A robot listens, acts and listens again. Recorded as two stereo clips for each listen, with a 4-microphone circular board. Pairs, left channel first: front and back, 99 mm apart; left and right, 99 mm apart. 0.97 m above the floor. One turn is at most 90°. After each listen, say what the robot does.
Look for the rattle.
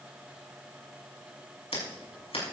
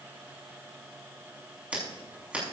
Keep listening.
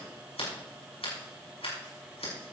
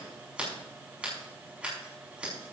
Keep listening.
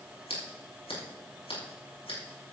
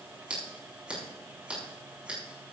I can't make out a rattle to turn to.